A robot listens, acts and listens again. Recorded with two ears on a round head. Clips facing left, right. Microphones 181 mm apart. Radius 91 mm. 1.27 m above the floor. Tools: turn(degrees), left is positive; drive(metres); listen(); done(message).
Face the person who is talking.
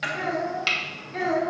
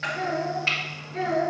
turn(degrees=60)
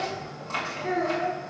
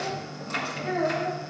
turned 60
turn(degrees=65)
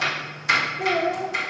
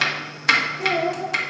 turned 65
turn(degrees=15)
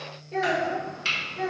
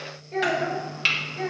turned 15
done("Facing the child speaking, over 4 m away.")